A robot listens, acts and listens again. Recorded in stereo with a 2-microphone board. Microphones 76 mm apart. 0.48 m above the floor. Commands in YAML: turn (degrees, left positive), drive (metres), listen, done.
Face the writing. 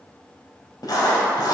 turn: 60
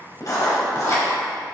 turn: 55
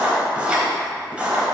turn: -15
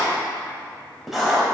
done: "Found it: writing, straight ahead, 1 to 2 m away."